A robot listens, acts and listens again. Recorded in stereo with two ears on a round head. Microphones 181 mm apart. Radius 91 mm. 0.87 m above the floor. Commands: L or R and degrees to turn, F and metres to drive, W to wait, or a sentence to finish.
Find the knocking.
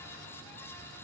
W
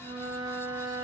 W
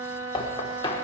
L20
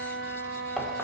W
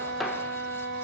W
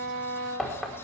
Found it: knocking, straight ahead, 1 to 2 m away.